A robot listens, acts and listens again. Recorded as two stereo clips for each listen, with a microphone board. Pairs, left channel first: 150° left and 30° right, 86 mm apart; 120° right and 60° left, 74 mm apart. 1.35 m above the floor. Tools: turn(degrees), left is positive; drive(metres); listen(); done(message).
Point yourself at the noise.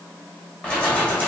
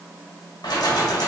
turn(degrees=-140)
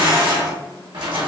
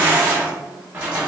turn(degrees=-15)
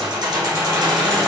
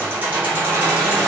done("Facing the keys jangling.")